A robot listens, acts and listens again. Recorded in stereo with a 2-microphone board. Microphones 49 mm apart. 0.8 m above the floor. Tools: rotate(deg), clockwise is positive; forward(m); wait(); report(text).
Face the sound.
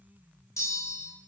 rotate(-90)
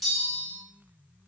report("Facing the bell.")